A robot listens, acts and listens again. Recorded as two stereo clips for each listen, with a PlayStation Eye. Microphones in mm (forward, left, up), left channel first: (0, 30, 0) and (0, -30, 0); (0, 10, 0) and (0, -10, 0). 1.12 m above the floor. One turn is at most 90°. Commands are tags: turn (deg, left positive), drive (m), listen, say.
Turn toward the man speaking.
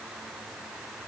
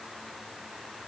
<listen/>
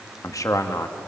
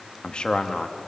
<turn deg="60"/>
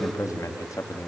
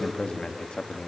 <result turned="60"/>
<turn deg="70"/>
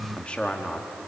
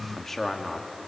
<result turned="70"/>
<turn deg="20"/>
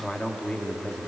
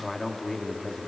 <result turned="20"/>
<turn deg="20"/>
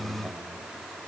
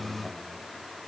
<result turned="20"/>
<listen/>
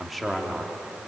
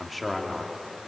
<say>Facing the man speaking.</say>